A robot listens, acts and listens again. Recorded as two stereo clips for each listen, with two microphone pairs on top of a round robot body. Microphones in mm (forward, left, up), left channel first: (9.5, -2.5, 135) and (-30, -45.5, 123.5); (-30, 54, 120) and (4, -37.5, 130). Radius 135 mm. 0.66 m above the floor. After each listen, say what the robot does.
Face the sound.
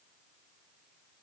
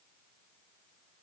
Keep listening.
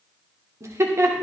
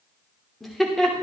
Turn 165° right.
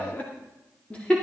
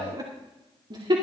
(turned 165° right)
Turn 30° right.
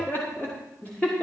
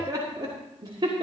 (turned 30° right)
Turn 25° right.
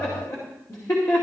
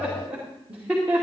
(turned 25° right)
Turn 10° left.
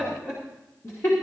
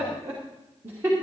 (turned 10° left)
Facing the laughter.